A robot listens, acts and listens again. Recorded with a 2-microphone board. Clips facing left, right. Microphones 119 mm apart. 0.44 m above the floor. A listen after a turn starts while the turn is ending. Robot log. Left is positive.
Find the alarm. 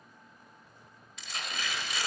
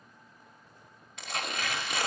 cmd idle
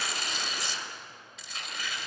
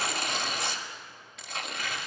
cmd idle
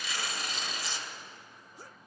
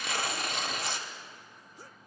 end: I can't make out an alarm, only tearing paper.